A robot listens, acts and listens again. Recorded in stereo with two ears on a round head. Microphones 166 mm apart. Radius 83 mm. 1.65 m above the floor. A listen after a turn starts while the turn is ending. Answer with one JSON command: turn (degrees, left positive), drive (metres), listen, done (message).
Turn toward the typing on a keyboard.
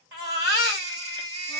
{"listen": true}
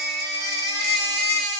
{"listen": true}
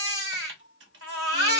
{"turn": -65}
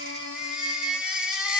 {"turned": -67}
{"listen": true}
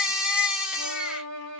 {"listen": true}
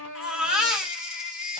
{"done": "I heard typing on a keyboard, but can't make it out now. It was about straight ahead or 45° right."}